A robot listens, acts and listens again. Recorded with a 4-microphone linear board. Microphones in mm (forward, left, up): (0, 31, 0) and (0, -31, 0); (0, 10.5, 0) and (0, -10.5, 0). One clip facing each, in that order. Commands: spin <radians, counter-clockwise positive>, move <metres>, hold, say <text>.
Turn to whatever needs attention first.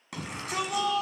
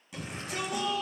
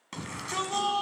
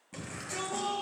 spin 1.22
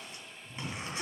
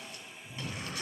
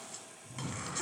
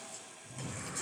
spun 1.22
spin 0.44
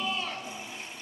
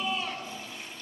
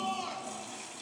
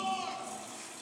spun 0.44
say Found it: a shout, straight ahead, 2 to 4 m away.